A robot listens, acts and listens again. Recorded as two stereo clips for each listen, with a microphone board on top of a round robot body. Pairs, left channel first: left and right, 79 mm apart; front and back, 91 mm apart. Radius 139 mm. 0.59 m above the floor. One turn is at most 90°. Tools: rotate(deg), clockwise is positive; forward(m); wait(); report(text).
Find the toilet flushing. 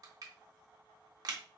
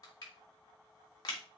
wait()
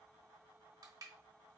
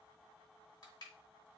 wait()
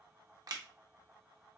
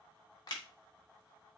report("I can't make out a toilet flushing to turn to.")